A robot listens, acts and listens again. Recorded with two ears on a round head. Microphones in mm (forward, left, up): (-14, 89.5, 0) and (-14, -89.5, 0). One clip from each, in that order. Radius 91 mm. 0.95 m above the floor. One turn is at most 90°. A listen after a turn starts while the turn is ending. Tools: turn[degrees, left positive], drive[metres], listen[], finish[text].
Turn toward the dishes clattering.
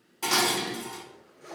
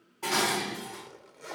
Action: turn[90]
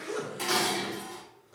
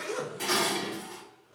Thought: So it is at 10° left.
Action: turn[10]
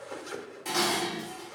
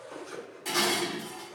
Action: finish[Found it: dishes clattering, straight ahead, 1 to 2 m away.]